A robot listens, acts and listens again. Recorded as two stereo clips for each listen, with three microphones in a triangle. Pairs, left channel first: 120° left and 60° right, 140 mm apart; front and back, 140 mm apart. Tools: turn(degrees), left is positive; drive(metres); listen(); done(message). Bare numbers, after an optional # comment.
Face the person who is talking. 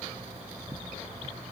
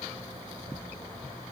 listen()
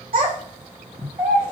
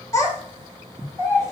# The child speaking: 65° right.
turn(-65)
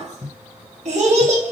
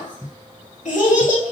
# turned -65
# The child speaking is now 25° right.
turn(-25)
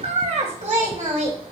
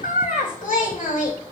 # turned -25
# The child speaking is now 20° right.
turn(-20)
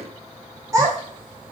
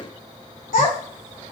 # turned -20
done("Facing the child speaking, 2 to 4 m away.")